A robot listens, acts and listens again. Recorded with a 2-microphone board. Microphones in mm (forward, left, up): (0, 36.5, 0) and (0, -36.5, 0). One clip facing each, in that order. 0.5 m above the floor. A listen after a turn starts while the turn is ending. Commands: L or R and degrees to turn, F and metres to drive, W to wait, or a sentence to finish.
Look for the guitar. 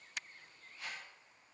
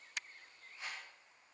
W
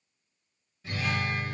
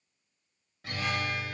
R75
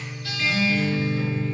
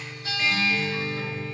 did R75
Found it: a guitar, straight ahead.